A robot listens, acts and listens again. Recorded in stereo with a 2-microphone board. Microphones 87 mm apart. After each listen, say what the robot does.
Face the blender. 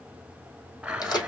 Turn 30° right.
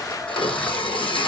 Turn 20° left.
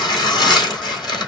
Keep listening.
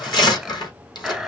Found it: a blender, straight ahead, under 1 m away.